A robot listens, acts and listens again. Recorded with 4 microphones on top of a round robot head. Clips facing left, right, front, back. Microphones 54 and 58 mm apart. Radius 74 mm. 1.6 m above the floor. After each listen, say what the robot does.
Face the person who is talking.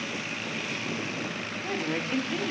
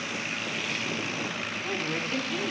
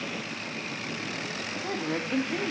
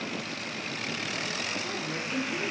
Turn 20° left.
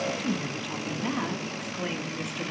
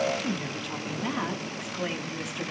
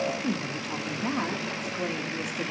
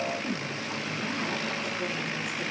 Facing the woman speaking, 2 to 4 m away.